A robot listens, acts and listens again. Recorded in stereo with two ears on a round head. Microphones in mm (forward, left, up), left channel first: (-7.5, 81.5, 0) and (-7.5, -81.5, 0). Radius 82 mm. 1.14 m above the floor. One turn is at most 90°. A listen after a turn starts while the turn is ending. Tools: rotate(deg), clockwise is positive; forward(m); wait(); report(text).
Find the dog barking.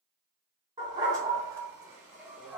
rotate(30)
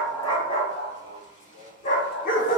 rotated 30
rotate(-50)
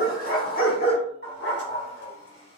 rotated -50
rotate(-60)
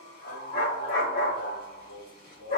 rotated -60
rotate(-50)
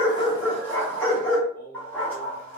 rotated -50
rotate(-10)
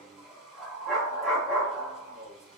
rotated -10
report("Facing the dog barking.")